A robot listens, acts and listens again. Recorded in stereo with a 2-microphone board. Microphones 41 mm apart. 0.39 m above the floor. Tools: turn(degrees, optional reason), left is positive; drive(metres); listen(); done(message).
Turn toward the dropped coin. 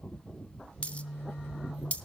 turn(degrees=35, reason="The dropped coin: about 35° left or 145° left.")
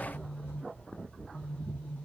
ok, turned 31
listen()
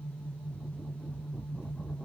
done("I heard a dropped coin, but can't make it out now. It was about 5° left or 115° left.")